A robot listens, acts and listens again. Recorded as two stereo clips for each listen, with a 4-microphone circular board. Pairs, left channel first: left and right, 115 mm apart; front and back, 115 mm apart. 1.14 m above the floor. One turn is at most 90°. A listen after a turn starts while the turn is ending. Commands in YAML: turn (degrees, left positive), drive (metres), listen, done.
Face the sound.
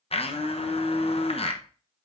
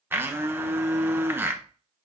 turn: 90
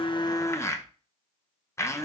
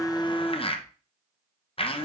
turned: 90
turn: 25
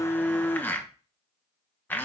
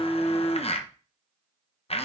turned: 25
turn: 20
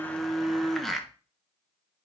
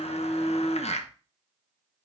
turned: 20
done: "Facing the blender."